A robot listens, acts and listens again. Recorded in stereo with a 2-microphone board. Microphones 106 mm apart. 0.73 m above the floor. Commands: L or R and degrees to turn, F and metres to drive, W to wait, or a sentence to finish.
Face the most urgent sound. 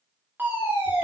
R20
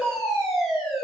Found it: a fire alarm, straight ahead.